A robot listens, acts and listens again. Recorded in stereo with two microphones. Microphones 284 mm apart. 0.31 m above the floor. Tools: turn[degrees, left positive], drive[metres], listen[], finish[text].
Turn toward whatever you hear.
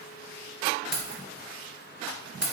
Thought: The keys jangling: about 55° left or 125° left.
Action: turn[55]
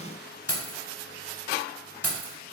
Thought: So it is at 50° left.
Action: turn[50]
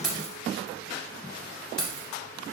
Action: finish[Facing the keys jangling.]